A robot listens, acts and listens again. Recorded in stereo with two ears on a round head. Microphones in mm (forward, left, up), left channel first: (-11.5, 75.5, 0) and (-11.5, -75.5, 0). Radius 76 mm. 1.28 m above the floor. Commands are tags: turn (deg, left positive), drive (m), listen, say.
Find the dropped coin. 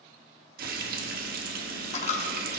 <turn deg="45"/>
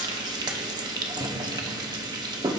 <listen/>
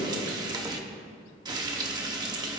<say>I heard a dropped coin, but can't make it out now. It was about straight ahead or 90° left.</say>